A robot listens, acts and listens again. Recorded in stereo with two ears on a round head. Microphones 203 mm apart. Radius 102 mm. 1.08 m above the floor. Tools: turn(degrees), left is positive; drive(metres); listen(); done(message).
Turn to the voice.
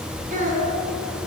turn(degrees=-35)
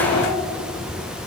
listen()
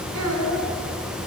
turn(degrees=-110)
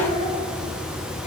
turn(degrees=30)
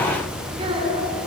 turn(degrees=-25)
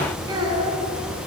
turn(degrees=-20)
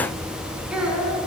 done("Facing the child speaking, over 4 m away.")